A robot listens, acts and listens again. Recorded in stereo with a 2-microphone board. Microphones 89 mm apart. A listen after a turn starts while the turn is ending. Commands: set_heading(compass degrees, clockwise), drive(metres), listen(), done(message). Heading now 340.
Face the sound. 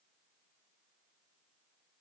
listen()
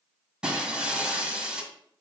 set_heading(10)
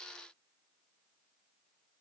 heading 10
listen()
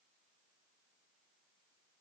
done("I heard breaking glass, but can't make it out now. It was about 20° left or 140° right.")